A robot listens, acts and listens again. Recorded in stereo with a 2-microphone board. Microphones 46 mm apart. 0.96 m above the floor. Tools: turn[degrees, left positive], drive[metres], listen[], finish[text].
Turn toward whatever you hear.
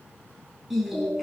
Action: turn[-30]
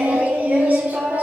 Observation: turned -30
Thought: So it is at 140° right.
Action: turn[-140]
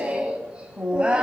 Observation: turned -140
Thought: The singing is now 20° right.
Action: turn[-20]
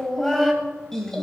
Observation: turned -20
Thought: The singing is now 10° left.
Action: turn[10]
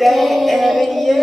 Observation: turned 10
Action: finish[Found it: singing, straight ahead.]